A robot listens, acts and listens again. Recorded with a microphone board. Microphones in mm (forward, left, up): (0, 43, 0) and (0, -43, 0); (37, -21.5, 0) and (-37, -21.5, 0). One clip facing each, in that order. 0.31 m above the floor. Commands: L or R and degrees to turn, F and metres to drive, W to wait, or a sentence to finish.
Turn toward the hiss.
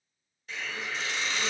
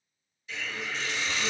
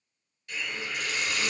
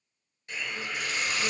L125
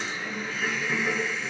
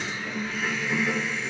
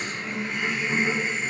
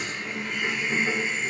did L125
L25
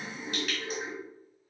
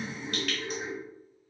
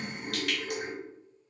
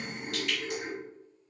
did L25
L15
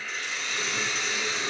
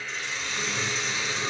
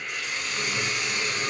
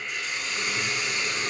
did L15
Facing the hiss.